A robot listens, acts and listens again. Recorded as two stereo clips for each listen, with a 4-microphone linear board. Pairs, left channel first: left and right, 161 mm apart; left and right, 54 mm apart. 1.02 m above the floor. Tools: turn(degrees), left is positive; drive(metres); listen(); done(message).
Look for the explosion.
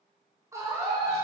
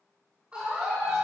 listen()
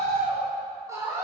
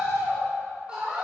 listen()
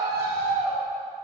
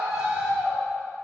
done("I can't make out an explosion to turn to.")